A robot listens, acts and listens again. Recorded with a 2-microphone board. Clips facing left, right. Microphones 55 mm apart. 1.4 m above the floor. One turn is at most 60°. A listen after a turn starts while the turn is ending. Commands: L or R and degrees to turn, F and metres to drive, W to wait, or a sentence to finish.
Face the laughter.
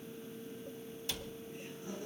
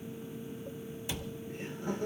R60
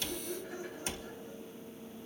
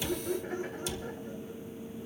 R45
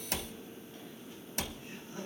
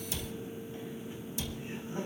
R25
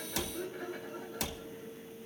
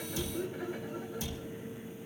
Facing the laughter.